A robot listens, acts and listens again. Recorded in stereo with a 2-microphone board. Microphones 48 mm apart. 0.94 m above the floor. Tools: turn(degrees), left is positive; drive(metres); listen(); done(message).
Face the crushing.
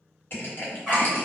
turn(degrees=45)
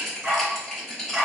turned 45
done("Facing the crushing.")